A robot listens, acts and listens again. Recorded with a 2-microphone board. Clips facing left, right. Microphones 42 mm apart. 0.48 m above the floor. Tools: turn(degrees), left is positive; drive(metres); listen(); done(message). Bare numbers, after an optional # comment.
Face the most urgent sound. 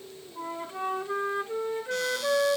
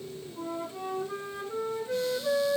listen()
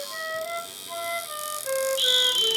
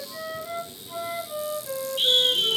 turn(-30)
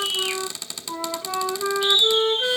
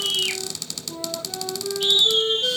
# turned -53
# So it is at 120° right.
turn(-120)
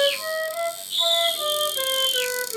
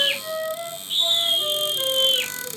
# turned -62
# The scream is now 60° right.
turn(-60)
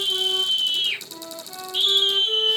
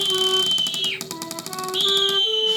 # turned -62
done("Facing the scream, over 4 m away.")